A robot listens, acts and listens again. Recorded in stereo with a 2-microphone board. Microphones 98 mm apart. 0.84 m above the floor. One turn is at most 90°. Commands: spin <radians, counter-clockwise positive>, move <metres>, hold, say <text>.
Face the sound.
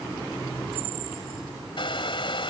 spin 1.05
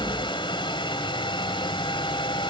spin 0.96
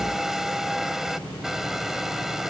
say Found it: a hair dryer, straight ahead.